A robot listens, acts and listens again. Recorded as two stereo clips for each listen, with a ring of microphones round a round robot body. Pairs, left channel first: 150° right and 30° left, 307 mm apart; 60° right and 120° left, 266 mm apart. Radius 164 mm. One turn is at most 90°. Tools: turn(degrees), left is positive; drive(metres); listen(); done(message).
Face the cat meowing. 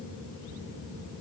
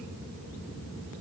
listen()
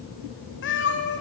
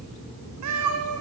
turn(degrees=90)
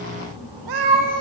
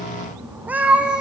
turn(degrees=35)
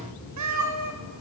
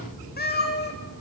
turn(degrees=-10)
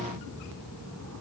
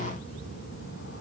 listen()
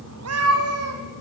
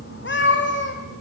turn(degrees=-15)
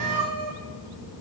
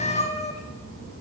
done("Facing the cat meowing.")